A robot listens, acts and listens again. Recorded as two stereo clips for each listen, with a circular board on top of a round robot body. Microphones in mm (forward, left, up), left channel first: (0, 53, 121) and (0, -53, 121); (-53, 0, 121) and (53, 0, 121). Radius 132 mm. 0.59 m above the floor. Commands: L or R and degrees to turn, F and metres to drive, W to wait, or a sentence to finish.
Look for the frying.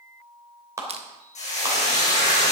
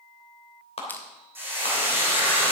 L75
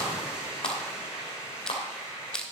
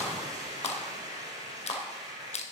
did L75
R10
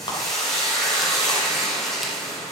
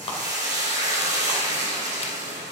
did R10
Found it: frying, straight ahead, over 4 m away.